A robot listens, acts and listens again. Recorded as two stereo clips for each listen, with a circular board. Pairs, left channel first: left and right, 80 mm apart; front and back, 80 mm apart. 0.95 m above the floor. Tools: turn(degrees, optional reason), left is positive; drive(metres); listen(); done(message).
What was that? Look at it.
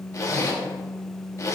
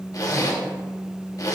turn(degrees=40, reason="The zipper: 40° left.")
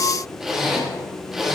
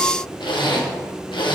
done("Found it: a zipper, straight ahead, 1 to 2 m away.")